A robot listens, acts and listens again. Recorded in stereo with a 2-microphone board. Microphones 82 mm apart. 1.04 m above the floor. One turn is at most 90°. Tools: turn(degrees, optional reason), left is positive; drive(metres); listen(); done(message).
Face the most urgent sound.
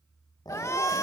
turn(degrees=35, reason="The shout: about 35° left or 145° left.")
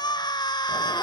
turn(degrees=90, reason="So it is at 100° left.")
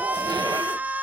turn(degrees=-20, reason="The shout is now 20° right.")
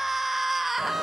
done("Found it: a shout, straight ahead, 1 to 2 m away.")